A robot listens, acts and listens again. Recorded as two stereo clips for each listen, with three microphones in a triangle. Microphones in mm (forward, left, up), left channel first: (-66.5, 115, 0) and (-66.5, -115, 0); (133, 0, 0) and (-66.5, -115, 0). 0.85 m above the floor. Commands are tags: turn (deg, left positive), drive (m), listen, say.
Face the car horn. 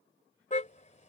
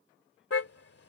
<turn deg="35"/>
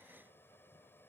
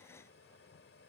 <listen/>
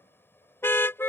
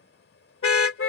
<turn deg="10"/>
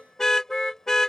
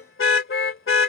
<say>Found it: a car horn, straight ahead.</say>